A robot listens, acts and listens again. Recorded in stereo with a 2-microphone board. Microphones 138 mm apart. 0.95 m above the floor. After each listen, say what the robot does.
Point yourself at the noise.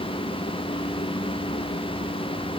Keep listening.
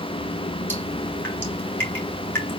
Turn 15° left.
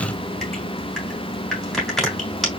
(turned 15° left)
Facing the dripping, 2 to 4 m away.